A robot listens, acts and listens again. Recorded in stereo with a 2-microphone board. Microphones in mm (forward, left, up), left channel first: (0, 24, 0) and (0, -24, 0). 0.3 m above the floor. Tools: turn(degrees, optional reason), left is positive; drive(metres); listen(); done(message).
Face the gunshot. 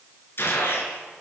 turn(degrees=55, reason="The gunshot: about 55° left or 125° left.")
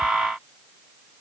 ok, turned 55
listen()
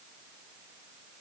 done("I heard a gunshot, but can't make it out now. It was about straight ahead or 70° left.")